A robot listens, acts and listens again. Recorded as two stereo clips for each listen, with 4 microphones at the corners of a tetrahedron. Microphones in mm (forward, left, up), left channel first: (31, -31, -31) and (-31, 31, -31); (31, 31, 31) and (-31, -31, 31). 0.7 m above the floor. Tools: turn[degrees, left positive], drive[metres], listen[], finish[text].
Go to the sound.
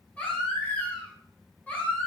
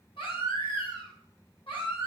Thought: The baby crying: 30° left.
Action: turn[30]
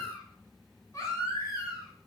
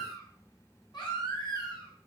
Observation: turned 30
Action: drive[1.0]
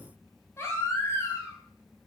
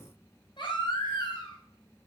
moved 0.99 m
Thought: The baby crying is now 15° left.
Action: turn[15]
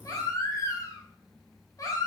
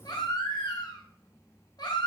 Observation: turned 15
Action: drive[1.0]
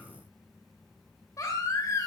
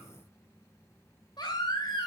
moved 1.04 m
Action: drive[1.0]
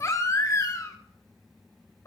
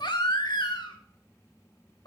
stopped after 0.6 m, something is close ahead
Thought: The baby crying is now 10° left.
Action: turn[10]
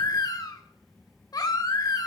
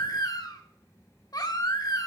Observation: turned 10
Action: finish[I am next to the baby crying.]